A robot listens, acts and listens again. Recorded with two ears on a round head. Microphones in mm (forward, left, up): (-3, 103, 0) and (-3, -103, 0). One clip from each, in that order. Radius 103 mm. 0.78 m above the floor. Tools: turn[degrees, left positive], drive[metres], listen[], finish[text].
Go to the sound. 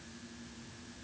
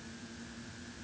Action: listen[]
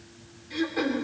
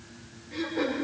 Thought: The throat clearing: about 55° left or 125° left.
Action: turn[55]
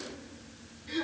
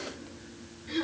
Action: drive[1.0]
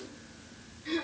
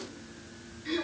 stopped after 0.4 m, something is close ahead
Action: finish[Blocked. The throat clearing is further on, straight ahead.]